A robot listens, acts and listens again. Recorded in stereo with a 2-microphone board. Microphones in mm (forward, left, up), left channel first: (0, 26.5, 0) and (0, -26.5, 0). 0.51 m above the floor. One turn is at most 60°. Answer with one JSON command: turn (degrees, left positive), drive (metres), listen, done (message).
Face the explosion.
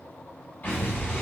{"turn": 45}
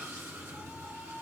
{"listen": true}
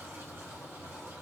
{"done": "I heard an explosion, but can't make it out now. It was about straight ahead or 90° left."}